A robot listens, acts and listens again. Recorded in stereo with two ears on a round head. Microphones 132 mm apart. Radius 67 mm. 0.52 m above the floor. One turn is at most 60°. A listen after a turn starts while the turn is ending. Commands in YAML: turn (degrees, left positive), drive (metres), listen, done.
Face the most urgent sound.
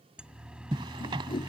turn: -30
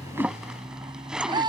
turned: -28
turn: -60
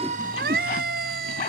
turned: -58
turn: -60
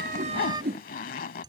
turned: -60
turn: -30
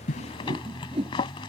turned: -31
done: "Facing the siren."